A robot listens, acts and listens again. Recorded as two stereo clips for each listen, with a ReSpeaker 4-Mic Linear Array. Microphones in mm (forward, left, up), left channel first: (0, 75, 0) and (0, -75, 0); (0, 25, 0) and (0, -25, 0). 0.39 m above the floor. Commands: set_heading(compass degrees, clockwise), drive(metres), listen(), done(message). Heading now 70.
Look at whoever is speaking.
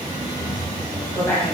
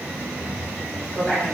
set_heading(55)
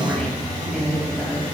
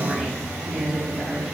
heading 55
done("Facing the woman speaking, 2 to 4 m away.")